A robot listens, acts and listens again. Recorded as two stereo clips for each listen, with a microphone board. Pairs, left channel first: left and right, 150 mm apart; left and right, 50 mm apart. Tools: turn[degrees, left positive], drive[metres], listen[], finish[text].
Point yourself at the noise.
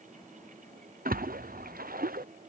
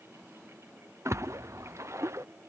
Thought: The splash: about 75° right or 105° right.
Action: turn[-75]
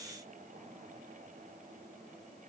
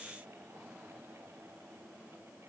Action: listen[]
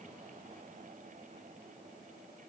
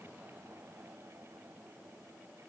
Action: finish[I heard a splash, but can't make it out now. It was about straight ahead or 30° right.]